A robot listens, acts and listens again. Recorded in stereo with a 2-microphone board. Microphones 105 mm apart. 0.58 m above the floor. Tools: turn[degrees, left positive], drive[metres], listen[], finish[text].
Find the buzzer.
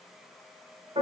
Action: listen[]
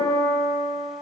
Action: listen[]
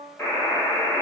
Thought: The buzzer: about 25° left or 155° left.
Action: turn[25]
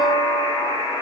Thought: So it is at 130° left.
Action: turn[130]
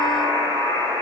Thought: The buzzer is now 30° right.
Action: turn[-30]
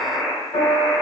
Thought: The buzzer is now 10° right.
Action: turn[-10]
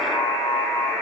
Action: finish[Facing the buzzer.]